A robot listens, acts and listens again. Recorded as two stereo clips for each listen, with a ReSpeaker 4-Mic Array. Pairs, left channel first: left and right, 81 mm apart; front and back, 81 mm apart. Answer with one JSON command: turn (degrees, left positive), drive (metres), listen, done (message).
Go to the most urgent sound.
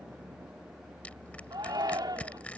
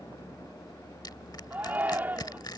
{"turn": -115}
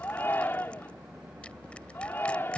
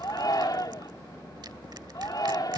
{"turn": 30}
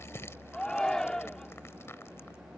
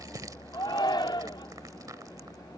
{"turn": 10}
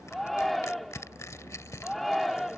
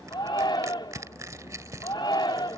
{"drive": 1.0}
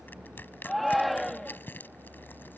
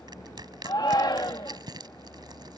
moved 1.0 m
{"drive": 1.0}
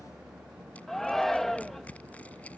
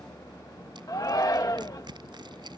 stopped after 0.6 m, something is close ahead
{"done": "I am next to the shout."}